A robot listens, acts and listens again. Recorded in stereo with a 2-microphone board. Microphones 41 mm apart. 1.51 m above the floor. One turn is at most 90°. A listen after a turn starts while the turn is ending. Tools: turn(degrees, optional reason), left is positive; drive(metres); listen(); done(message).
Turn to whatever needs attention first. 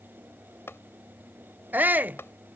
turn(degrees=-45, reason="The shout: about 45° right or 135° right.")
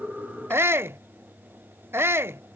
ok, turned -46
turn(degrees=-85, reason="So it is at 85° right.")
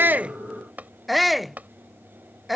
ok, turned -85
done("Facing the shout.")